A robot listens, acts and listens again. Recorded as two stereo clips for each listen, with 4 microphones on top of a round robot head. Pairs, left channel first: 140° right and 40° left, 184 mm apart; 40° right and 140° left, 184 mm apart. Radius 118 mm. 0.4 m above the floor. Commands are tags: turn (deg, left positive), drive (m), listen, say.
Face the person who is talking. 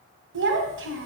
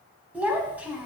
<turn deg="55"/>
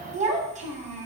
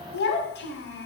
<turn deg="-10"/>
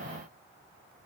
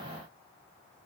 <listen/>
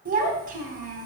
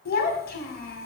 <say>Facing the child speaking, 1 to 2 m away.</say>